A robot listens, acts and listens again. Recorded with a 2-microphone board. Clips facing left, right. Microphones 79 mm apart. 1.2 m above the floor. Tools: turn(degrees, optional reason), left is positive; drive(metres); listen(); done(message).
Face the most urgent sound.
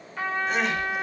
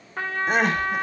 turn(degrees=-50, reason="The crying: about 50° right or 130° right.")
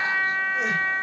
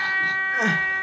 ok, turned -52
turn(degrees=-75, reason="So it is at 75° right.")
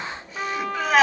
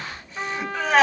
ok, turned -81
done("Facing the crying, 1 to 2 m away.")